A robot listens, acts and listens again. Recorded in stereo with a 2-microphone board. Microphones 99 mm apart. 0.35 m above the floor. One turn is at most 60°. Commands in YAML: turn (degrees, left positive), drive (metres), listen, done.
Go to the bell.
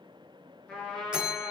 turn: -30
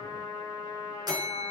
turn: -60
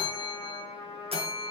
turn: -60
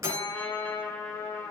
turn: -30
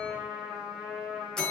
drive: 1.0
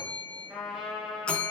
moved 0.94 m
turn: 10
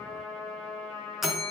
drive: 1.0
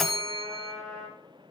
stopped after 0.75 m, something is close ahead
done: "I am next to the bell."